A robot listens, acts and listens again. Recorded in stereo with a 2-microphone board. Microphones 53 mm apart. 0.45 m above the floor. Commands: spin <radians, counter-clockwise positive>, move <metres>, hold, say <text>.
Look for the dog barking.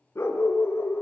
spin 0.96
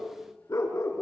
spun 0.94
spin 1.40
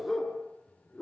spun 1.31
spin 0.26
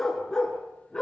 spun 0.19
spin 0.26
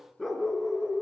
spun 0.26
say Found it: a dog barking, straight ahead.